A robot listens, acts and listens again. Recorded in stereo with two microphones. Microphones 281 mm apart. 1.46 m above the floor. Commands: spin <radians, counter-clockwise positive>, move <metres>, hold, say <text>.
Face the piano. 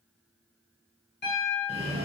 spin 0.70
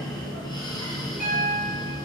spin 1.83
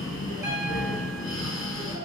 hold
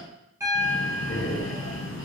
spin -0.17
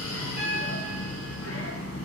hold
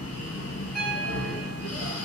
hold
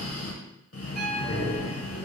say I heard a piano from this way, but can't make it out now.